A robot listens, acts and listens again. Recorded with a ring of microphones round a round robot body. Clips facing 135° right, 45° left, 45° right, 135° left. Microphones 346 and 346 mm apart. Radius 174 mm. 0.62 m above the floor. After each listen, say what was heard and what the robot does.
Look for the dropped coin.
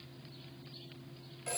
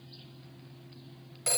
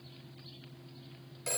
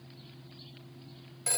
Keep listening.
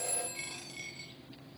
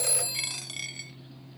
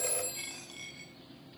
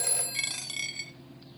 The dropped coin: 95° left. Turn 95° left.
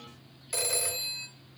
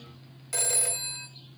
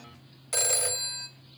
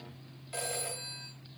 I heard a dropped coin from this way, but can't make it out now.